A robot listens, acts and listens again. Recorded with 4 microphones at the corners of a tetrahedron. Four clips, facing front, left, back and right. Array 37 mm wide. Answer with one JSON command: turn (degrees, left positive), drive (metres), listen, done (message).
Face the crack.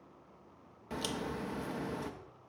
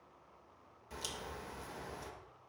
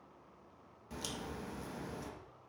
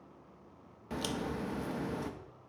{"turn": -50}
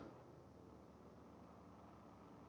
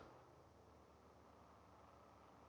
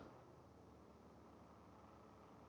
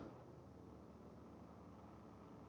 {"done": "Facing where the crack came from. I can't hear it now."}